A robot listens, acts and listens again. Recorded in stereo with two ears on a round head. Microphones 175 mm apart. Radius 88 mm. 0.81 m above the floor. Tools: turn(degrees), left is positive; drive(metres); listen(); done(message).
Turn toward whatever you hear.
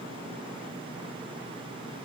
listen()
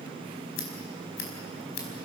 turn(degrees=90)
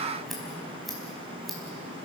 done("Facing the scissors.")